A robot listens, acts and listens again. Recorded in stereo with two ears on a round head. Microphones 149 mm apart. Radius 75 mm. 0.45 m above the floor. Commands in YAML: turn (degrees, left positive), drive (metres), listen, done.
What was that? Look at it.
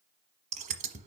turn: -50
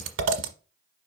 turn: -85
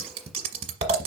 turn: -35
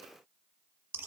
listen: true
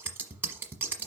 turn: -10
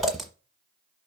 done: "Facing the scissors, 1 to 2 m away."